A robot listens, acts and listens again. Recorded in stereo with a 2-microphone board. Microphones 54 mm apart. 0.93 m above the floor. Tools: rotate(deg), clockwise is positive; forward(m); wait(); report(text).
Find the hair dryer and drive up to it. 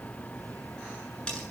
wait()
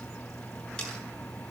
wait()
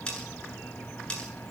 report("I can't make out a hair dryer to turn to.")